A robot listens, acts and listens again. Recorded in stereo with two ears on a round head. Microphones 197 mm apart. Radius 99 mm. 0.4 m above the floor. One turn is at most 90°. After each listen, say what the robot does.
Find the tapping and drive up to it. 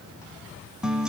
Keep listening.
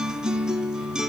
Keep listening.
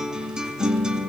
I can't make out tapping to turn to.